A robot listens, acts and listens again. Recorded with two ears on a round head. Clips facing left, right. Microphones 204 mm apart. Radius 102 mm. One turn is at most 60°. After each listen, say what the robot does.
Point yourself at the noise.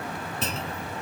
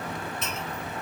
Turn 30° left.
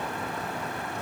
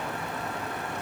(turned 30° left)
Keep listening.
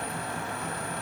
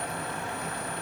I heard a clunk, but can't make it out now. It was about straight ahead or 120° left.